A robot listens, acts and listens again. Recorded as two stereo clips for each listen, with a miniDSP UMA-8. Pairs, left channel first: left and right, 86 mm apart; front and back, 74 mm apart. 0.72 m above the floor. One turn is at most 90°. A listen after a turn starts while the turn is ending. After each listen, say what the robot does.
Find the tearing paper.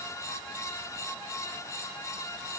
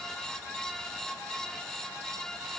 Keep listening.
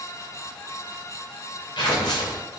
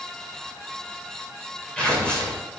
Turn 75° left.
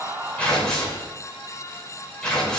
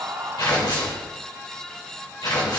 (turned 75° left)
Turn 10° left.
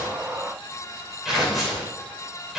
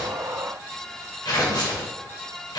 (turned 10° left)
Found it: tearing paper, straight ahead.